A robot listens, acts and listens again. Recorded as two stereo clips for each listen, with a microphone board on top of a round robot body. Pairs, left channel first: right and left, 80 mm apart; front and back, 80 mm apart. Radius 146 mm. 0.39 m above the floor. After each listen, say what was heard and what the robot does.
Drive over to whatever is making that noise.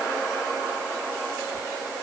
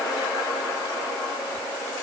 Keep listening.
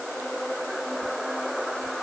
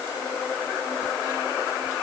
Keep listening.
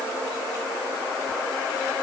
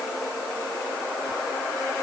I can't make out anything to turn to.